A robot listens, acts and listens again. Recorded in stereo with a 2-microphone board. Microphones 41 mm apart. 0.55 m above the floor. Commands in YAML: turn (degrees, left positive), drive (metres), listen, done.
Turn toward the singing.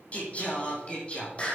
turn: 25
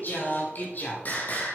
turn: 40
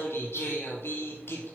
turn: 115
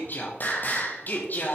turn: 45
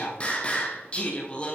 turn: 25
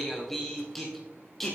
done: "Found it: singing, straight ahead."